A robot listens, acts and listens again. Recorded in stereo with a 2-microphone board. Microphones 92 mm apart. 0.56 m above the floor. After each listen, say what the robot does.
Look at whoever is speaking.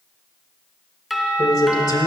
Turn 50° left.
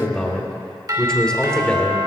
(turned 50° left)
Turn 10° left.
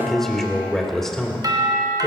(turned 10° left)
Facing the man speaking.